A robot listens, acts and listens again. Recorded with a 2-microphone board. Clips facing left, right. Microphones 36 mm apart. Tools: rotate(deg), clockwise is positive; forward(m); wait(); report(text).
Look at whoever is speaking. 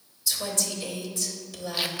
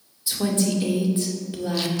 rotate(30)
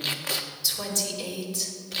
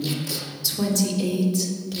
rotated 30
report("Found it: a woman speaking, straight ahead, 1 to 2 m away.")